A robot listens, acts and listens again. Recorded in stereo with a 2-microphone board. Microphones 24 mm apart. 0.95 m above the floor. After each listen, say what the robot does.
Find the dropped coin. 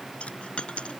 Turn 45° left.
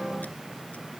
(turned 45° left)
Keep listening.
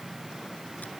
I heard a dropped coin, but can't make it out now. It was about straight ahead or 90° left.